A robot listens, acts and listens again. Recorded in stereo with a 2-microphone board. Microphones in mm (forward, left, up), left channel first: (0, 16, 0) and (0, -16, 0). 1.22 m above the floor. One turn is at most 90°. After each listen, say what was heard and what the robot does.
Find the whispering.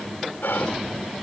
Turn 90° left.
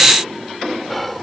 Facing the whispering.